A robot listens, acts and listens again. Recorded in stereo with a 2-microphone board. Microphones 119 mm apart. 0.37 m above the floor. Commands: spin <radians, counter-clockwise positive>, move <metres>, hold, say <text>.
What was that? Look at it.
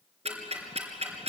spin -1.05
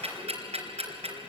spin -1.05
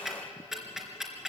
say Facing the ticking.